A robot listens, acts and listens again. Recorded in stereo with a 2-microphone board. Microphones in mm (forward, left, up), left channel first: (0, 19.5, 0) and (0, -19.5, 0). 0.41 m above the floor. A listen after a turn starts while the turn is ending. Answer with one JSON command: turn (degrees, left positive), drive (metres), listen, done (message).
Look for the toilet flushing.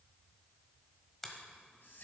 {"listen": true}
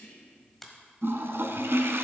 {"turn": -90}
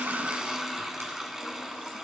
{"done": "Found it: a toilet flushing, straight ahead, under 1 m away."}